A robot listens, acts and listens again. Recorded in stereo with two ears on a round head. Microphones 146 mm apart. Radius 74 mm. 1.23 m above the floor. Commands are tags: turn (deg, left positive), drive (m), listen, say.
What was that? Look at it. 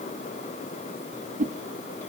<turn deg="-50"/>
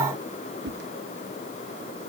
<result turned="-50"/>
<turn deg="-80"/>
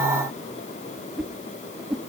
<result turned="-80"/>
<say>Facing the whoosh, under 1 m away.</say>